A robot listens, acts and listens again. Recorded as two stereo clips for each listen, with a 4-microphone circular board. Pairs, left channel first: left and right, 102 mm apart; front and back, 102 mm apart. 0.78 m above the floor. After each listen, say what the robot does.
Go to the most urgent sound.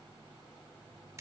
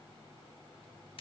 Keep listening.
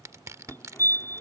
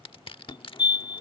Turn 30° left.
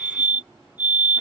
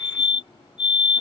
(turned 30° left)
Turn 20° right.
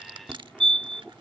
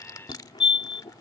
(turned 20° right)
Drive 1.0 m forward.
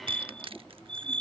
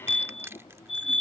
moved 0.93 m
Turn 10° left.
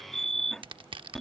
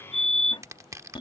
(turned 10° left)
Drive 1.0 m forward.
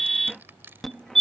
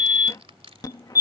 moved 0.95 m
Drive 1.0 m forward.
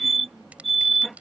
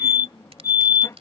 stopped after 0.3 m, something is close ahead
I am next to the fire alarm.